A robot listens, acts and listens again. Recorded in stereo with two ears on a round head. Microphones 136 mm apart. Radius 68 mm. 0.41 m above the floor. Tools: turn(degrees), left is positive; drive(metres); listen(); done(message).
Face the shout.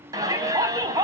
turn(degrees=-25)
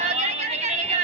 turn(degrees=-125)
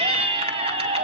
turn(degrees=-40)
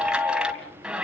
done("Found it: a shout, straight ahead, 2 to 4 m away.")